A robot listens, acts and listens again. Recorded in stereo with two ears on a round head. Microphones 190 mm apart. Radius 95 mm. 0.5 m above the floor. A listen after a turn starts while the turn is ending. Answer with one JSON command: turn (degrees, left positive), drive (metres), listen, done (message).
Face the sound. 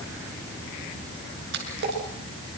{"turn": -55}
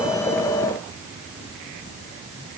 {"listen": true}
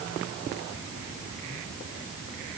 {"done": "I heard a splash, but can't make it out now. It was about straight ahead or 70° right."}